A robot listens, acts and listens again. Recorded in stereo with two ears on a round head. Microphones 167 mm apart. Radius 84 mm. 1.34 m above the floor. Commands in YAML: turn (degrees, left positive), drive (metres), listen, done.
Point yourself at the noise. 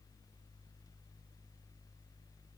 listen: true
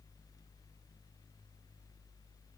listen: true
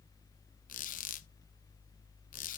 turn: 45
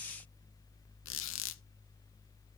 turn: 90
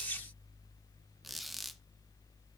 done: "Found it: a squeak, straight ahead, under 1 m away."